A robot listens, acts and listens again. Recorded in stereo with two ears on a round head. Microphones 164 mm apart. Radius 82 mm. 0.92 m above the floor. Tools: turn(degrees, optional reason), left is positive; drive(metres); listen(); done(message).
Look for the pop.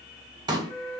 turn(degrees=-25, reason="The pop: about 25° right or 155° right.")
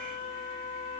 listen()
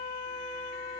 done("I heard a pop, but can't make it out now. It was about straight ahead or 130° right.")